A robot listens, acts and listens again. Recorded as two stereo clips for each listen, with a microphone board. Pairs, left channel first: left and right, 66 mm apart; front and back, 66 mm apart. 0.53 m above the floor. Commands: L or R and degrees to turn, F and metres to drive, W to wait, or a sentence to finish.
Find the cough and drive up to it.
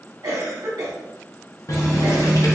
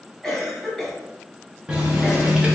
R85
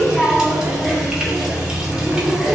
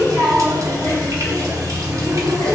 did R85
W
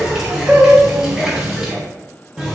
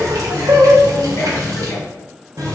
W
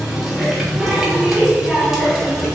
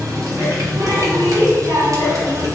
I heard a cough from this way, but can't make it out now. I did not reach it.